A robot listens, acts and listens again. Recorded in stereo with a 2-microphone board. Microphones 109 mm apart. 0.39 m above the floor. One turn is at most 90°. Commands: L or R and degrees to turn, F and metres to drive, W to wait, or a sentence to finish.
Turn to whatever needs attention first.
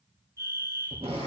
R25
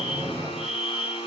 Facing the fire alarm, over 4 m away.